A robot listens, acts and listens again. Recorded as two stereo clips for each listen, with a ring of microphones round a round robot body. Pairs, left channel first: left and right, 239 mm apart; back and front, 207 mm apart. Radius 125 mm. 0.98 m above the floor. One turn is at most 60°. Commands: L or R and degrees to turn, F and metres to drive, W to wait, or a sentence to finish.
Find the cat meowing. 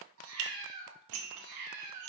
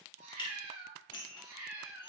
R60
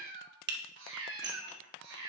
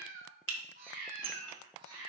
R60
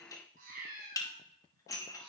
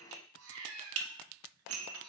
R40
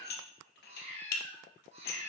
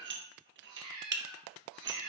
R25
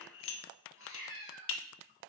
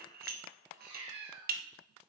R10
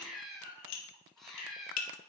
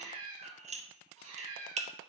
Found it: a cat meowing, straight ahead, 2 to 4 m away.